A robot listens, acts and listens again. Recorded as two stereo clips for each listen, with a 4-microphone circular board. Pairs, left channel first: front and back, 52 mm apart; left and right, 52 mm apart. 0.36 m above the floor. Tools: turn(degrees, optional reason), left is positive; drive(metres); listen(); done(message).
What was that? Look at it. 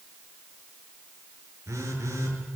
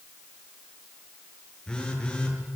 turn(degrees=165, reason="The phone buzzing: 165° left.")
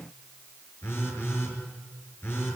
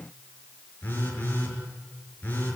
turn(degrees=40, reason="The phone buzzing is now 40° left.")
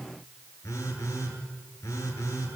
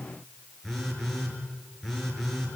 done("Found it: a phone buzzing, straight ahead.")